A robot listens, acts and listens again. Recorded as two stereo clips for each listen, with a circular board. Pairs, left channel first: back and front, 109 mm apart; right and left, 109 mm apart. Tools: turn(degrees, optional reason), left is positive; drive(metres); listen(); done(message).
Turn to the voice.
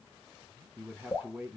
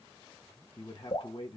turn(degrees=-75, reason="The man speaking: 75° right.")
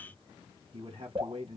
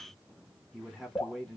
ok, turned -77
done("Found it: a man speaking, straight ahead, 1 to 2 m away.")